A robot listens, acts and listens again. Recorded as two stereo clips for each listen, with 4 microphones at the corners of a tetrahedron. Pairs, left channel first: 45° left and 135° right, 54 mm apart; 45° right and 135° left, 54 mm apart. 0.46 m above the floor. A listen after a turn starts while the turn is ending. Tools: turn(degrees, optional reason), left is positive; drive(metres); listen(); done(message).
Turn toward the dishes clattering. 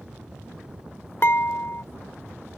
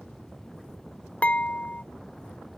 turn(degrees=15, reason="The dishes clattering: 15° left.")
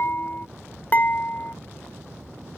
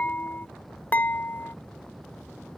done("Facing the dishes clattering.")